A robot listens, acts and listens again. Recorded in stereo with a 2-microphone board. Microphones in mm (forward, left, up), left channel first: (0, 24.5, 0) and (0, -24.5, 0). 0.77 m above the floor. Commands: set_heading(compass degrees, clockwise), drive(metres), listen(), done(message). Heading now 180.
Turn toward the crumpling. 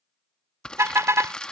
set_heading(165)
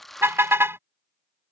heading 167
done("Found it: crumpling, straight ahead.")